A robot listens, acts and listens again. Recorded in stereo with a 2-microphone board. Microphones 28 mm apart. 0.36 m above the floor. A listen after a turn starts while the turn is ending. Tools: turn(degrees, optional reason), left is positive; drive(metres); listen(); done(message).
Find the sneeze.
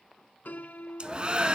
turn(degrees=-30, reason="The sneeze: about 30° right or 150° right.")
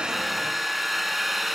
listen()
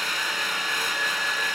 done("I heard a sneeze, but can't make it out now. It was about straight ahead or 120° right.")